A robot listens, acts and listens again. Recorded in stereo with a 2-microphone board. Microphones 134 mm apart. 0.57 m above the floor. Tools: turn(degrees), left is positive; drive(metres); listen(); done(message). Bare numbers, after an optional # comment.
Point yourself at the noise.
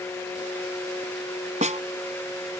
# The snare drum: about 70° right or 110° right.
turn(-70)
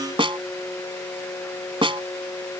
# So it is at 45° right.
turn(-45)
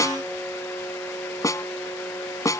# The snare drum is now 25° left.
turn(25)
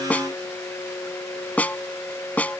# The snare drum is now 10° left.
turn(10)
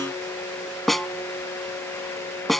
done("Facing the snare drum.")